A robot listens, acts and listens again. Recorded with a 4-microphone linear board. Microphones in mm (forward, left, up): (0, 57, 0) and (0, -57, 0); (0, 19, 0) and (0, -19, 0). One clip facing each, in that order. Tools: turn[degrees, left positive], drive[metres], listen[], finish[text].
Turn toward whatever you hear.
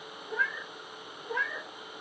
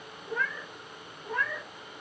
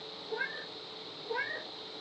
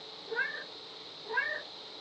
Thought: The cat meowing: about 55° right or 125° right.
Action: turn[-55]
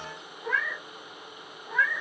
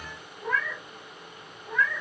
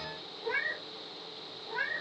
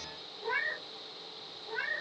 Action: finish[Facing the cat meowing, 1 to 2 m away.]